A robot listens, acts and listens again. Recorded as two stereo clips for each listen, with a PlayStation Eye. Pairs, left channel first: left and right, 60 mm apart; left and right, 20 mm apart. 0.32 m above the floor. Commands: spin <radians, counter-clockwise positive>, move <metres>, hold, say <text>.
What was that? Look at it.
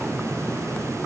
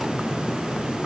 hold
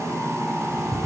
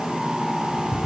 spin -0.26
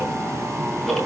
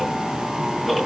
say Found it: ticking, straight ahead.